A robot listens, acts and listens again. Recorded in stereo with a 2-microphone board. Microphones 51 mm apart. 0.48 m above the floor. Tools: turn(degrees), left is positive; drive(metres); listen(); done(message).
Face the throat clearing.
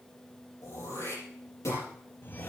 turn(degrees=65)
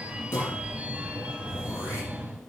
turn(degrees=50)
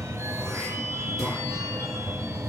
listen()
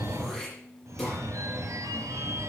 done("Found it: throat clearing, straight ahead.")